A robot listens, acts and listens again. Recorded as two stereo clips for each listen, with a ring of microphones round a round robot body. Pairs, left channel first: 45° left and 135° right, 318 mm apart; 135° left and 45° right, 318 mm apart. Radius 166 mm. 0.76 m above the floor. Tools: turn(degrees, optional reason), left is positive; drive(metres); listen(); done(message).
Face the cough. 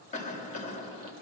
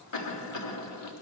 turn(degrees=110, reason="The cough: 110° left.")
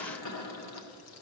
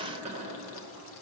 turn(degrees=25, reason="The cough is now 25° left.")
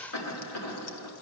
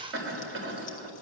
done("Found it: a cough, straight ahead, 1 to 2 m away.")